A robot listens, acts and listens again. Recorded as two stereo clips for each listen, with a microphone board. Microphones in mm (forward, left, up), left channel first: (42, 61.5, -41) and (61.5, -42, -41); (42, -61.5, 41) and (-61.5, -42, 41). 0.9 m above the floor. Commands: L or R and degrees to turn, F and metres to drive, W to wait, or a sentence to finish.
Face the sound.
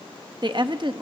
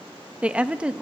R110
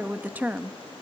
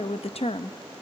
Facing the woman speaking, under 1 m away.